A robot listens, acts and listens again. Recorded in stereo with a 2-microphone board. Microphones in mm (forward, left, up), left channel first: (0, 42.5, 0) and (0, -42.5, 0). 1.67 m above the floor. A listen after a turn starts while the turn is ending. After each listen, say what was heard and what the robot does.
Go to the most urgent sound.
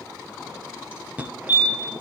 The fire alarm: about 15° right or 165° right. Turn 15° right.
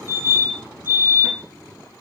So it is at 150° right. Turn 150° right.
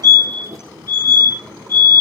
The fire alarm is now 50° right. Turn 50° right.
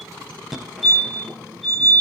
Drive 1.0 m forward.
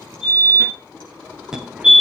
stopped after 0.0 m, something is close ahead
The fire alarm is now 10° right. Turn 10° right.
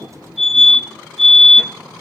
Something is in my way. I am facing the fire alarm but have not reached it.